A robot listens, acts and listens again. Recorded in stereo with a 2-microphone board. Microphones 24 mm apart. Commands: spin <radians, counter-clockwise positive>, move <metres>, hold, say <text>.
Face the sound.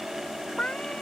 spin 1.13
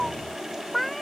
say Facing the cat meowing.